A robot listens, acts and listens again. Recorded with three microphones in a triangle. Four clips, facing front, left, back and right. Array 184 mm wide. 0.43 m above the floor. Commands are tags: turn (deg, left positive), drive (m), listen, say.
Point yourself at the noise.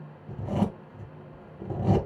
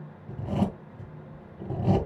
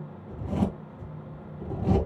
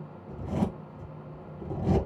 <turn deg="35"/>
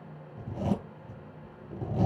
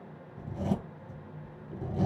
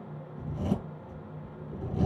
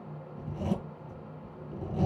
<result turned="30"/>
<say>Facing the zipper.</say>